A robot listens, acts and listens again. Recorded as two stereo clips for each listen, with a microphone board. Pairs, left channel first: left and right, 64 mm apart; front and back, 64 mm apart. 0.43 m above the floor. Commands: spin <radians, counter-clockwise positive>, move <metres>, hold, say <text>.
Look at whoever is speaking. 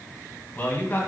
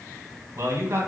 spin 2.53
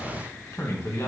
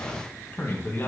spin 0.87
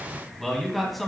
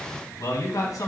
say Found it: a man speaking, straight ahead, 2 to 4 m away.